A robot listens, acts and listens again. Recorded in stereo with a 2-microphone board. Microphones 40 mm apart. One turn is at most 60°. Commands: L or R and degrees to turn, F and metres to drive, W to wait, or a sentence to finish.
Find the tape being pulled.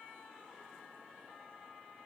W
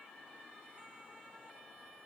W
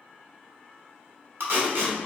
R60
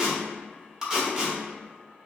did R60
R15
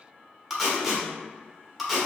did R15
Facing the tape being pulled, under 1 m away.